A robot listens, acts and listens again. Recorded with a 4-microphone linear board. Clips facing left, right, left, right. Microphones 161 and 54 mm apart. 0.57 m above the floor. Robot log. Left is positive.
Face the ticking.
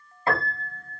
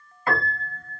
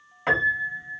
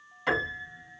cmd idle
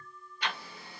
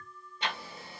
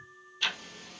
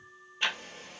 note: The ticking: about 25° right or 155° right.
cmd yaw -25
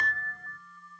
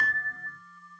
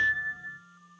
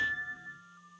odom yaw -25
cmd idle
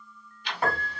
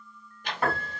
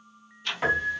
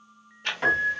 note: So it is at 125° right.
cmd yaw -125
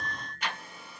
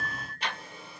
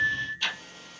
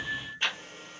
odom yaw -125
note: The ticking is now 30° right.
cmd yaw -30
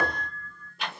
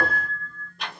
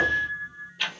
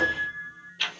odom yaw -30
end: Facing the ticking.